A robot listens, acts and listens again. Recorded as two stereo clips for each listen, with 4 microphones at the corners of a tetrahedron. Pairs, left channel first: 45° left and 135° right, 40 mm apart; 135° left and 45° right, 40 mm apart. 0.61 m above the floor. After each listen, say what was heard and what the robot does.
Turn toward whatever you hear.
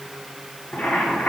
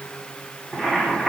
The boiling: 50° left. Turn 50° left.
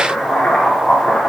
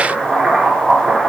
The boiling is now 15° left. Turn 15° left.
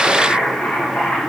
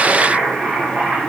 Found it: boiling, straight ahead, 1 to 2 m away.